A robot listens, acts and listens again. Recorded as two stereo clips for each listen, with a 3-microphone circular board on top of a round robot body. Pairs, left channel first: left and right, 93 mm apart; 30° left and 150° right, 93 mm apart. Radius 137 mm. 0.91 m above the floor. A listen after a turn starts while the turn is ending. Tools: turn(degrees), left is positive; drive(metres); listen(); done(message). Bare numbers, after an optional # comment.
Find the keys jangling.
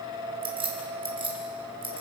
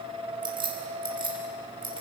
# The keys jangling: 120° right.
turn(-120)
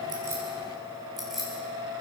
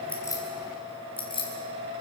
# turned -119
done("Found it: keys jangling, straight ahead.")